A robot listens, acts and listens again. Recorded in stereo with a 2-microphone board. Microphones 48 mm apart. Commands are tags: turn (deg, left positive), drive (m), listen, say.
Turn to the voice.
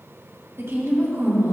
<turn deg="-70"/>
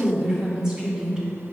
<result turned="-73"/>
<turn deg="-15"/>
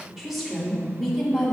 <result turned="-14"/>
<say>Found it: a woman speaking, straight ahead, 2 to 4 m away.</say>